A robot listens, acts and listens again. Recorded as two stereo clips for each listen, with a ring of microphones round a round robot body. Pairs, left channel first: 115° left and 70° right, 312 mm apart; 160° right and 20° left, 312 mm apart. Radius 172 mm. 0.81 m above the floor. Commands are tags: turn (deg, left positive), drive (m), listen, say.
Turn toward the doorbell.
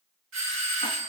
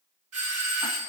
<turn deg="-20"/>
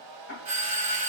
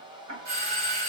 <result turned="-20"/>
<say>Facing the doorbell, 2 to 4 m away.</say>